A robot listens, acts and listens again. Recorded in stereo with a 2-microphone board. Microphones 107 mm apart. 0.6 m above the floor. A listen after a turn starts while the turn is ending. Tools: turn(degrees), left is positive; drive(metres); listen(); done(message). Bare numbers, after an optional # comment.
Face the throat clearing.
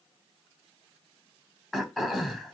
turn(30)
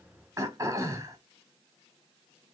# So it is at 30° right.
turn(-30)
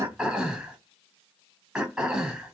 done("Found it: throat clearing, straight ahead, 1 to 2 m away.")